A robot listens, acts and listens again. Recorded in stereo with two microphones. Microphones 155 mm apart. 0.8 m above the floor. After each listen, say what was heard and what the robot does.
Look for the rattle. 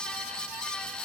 Keep listening.
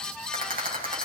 The rattle: about 65° right or 115° right. Turn 65° right.
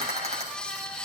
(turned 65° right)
So it is at 45° right. Turn 45° right.
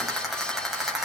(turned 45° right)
Facing the rattle, over 4 m away.